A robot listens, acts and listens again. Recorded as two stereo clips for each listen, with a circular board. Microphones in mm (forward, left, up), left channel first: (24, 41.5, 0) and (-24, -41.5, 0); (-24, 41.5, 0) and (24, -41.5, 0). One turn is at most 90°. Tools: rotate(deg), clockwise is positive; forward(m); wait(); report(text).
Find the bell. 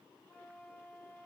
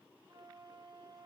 wait()
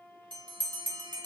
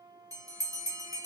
rotate(90)
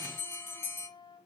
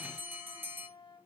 report("Facing the bell, 2 to 4 m away.")